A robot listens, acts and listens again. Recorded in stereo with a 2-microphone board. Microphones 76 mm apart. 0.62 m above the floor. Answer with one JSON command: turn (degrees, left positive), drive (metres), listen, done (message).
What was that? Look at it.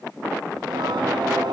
{"turn": -75}
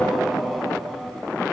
{"done": "Facing the singing."}